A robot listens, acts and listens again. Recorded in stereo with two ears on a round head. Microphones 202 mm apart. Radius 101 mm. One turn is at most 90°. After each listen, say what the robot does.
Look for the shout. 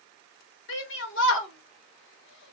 Turn 55° left.
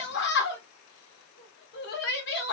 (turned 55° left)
Turn 55° left.
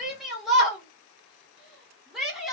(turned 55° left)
Found it: a shout, straight ahead.